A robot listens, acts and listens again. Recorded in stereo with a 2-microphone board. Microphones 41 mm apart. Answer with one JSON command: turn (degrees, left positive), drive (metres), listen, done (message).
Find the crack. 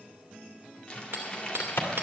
{"turn": 90}
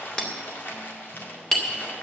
{"done": "Facing where the crack came from. I can't hear it now."}